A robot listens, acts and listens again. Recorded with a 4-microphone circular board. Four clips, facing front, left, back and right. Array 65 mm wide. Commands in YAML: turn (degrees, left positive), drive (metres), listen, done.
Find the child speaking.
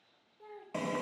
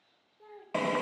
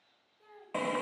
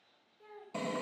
turn: 45
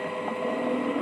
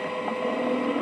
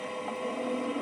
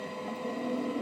listen: true
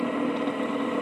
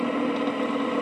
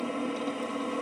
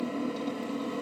listen: true
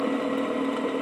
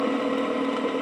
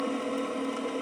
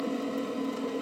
done: "I heard a child speaking from this way, but can't make it out now."